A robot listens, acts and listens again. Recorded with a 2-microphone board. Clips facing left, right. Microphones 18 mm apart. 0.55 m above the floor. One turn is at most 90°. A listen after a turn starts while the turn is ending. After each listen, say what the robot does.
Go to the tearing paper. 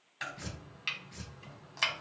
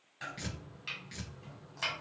Turn 70° right.
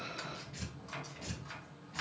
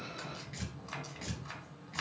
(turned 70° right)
Turn 40° right.
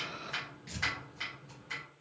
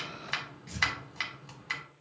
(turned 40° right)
Turn 15° left.
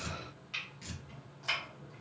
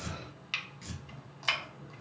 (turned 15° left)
Drive 1.0 m forward.
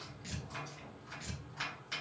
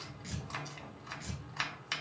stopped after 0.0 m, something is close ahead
Blocked. The tearing paper is further on, straight ahead.